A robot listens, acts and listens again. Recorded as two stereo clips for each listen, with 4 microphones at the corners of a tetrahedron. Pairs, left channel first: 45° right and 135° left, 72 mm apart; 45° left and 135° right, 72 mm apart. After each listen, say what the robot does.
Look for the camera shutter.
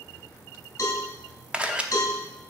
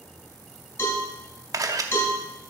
Turn 155° right.
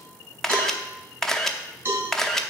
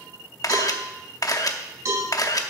Turn 40° left.
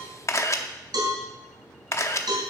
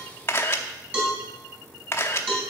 Facing the camera shutter, under 1 m away.